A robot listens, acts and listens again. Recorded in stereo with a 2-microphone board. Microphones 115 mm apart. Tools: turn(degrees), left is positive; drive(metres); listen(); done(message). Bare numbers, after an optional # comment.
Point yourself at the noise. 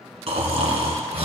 # The snoring: about 60° right or 120° right.
turn(-60)
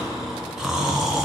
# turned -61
done("Found it: snoring, straight ahead, 1 to 2 m away.")